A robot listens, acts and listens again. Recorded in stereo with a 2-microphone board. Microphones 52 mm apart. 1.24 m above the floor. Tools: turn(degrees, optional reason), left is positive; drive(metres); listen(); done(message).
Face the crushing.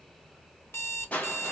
turn(degrees=25, reason="The crushing: about 25° left or 155° left.")
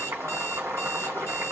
listen()
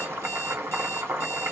listen()
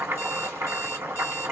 done("I heard crushing, but can't make it out now. It was about straight ahead or 130° left.")